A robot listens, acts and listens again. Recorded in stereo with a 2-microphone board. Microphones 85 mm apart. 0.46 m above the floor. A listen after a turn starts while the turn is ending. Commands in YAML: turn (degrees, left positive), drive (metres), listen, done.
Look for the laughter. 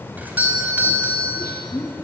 turn: 40
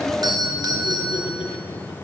listen: true
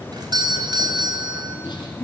turn: 115
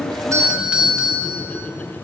listen: true
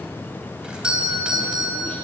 listen: true
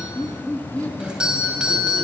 turn: 15
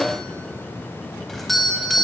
listen: true
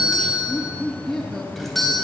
done: "Facing the laughter."